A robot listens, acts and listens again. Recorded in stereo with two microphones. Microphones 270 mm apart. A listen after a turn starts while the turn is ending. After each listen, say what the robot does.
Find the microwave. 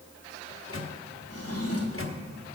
Turn 50° left.
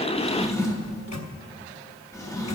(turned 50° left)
Keep listening.
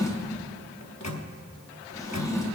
Turn 80° left.
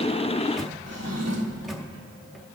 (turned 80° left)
Facing the microwave.